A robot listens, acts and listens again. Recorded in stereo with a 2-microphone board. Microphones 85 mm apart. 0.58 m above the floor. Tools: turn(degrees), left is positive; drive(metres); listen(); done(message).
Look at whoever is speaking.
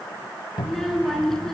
turn(degrees=30)
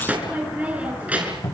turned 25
turn(degrees=-15)
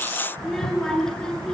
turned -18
turn(degrees=10)
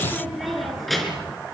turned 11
done("Found it: a child speaking, straight ahead.")